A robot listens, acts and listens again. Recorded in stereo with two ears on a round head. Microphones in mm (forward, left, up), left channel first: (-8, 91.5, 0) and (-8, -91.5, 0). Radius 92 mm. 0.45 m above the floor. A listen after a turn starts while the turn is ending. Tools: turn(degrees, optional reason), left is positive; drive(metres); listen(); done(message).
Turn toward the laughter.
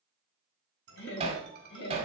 turn(degrees=60, reason="The laughter: about 60° left or 120° left.")
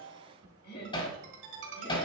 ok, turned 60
turn(degrees=55, reason="So it is at 55° left.")
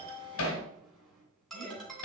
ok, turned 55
done("Found it: laughter, straight ahead.")